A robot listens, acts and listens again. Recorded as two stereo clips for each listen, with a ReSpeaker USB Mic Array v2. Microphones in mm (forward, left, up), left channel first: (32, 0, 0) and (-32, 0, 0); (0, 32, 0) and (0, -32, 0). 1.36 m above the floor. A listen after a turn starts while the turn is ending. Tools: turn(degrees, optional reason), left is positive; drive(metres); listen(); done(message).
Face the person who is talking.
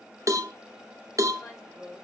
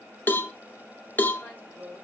turn(degrees=40, reason="The woman speaking: 40° left.")
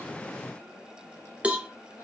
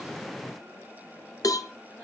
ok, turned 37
turn(degrees=10, reason="The woman speaking is now 10° left.")
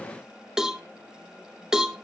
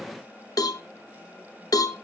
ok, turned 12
listen()
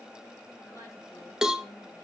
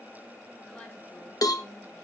listen()
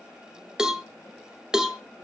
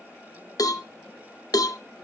done("I heard a woman speaking from this way, but can't make it out now.")